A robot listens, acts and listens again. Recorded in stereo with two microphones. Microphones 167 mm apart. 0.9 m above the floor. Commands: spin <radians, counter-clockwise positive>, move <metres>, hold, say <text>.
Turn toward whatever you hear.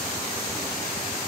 hold
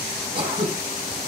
spin -0.52
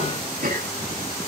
spin -2.09
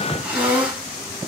say Found it: throat clearing, straight ahead, over 4 m away.